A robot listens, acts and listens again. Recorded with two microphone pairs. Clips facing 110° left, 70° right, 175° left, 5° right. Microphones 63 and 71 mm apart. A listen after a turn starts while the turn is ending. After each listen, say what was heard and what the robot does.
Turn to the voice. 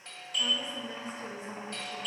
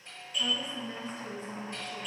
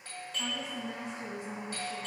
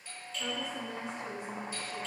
The woman speaking: 175° left. Turn 175° left.
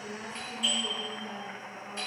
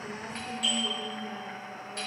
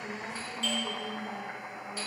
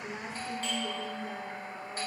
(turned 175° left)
The woman speaking is now 15° right. Turn 15° right.
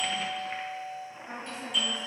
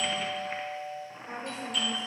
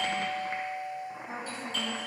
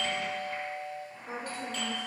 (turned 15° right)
Found it: a woman speaking, straight ahead, over 4 m away.